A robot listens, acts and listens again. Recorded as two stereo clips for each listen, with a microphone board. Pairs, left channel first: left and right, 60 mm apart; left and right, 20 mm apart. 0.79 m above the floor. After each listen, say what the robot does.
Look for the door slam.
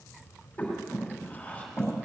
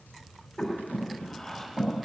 Keep listening.
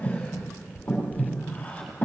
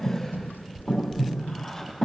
Keep listening.
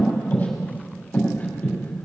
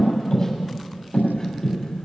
I can't make out a door slam, only breathing.